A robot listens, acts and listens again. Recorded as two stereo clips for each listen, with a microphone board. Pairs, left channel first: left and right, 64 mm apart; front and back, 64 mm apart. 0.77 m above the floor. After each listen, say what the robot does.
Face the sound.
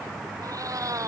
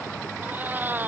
Turn 120° right.
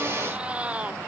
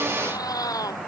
Turn 20° right.
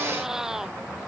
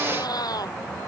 Facing the cat meowing.